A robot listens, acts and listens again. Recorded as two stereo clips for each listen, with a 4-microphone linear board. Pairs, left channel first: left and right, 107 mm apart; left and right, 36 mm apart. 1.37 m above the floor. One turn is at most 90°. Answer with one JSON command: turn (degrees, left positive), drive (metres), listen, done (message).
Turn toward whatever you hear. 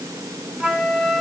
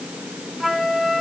{"turn": -30}
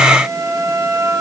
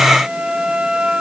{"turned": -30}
{"turn": -90}
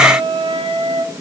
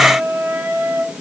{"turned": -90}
{"turn": -65}
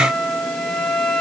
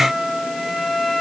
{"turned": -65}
{"done": "Found it: a flute, straight ahead."}